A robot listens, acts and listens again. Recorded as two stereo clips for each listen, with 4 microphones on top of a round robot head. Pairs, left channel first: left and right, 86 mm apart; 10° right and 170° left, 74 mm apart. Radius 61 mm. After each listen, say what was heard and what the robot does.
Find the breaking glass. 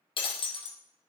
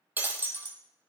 The breaking glass: 105° left. Turn 105° left.
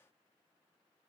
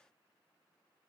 I heard breaking glass from this way, but can't make it out now.